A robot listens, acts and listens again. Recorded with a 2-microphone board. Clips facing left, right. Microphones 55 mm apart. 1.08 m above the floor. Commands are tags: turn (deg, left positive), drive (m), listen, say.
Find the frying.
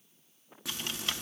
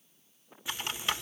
<turn deg="90"/>
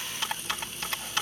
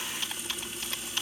<say>Found it: frying, straight ahead.</say>